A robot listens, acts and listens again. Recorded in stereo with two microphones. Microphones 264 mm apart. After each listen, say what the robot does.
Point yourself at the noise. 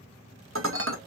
Turn 50° right.
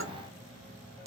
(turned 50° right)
Turn 65° right.
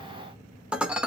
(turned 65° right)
Facing the dishes clattering.